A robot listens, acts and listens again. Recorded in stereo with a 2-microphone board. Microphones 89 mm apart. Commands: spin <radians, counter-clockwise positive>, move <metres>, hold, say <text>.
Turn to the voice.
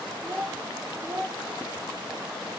spin -0.44
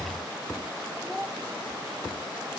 say Found it: a child speaking, straight ahead, 2 to 4 m away.